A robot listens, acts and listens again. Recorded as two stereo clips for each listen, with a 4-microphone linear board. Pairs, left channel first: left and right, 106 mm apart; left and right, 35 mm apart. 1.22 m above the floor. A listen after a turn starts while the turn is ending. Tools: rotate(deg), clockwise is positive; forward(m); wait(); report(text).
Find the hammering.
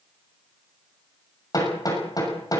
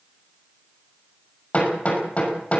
rotate(-35)
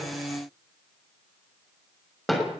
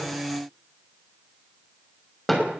report("Facing the hammering, over 4 m away.")